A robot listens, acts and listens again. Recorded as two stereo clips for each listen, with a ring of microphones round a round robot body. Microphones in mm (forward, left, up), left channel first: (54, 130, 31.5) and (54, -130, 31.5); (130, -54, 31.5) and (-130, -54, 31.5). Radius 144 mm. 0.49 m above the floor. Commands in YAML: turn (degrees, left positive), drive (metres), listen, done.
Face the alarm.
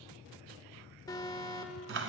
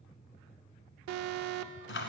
turn: 165
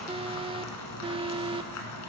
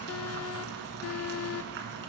turn: -20
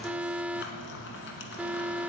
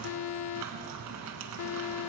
done: "Facing the alarm."